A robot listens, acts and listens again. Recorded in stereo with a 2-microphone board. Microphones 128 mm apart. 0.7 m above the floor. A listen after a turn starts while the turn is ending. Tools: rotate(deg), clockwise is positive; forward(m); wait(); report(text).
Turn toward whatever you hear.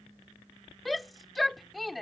rotate(-30)
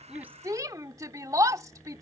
rotate(30)
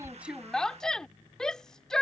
report("Found it: a shout, straight ahead.")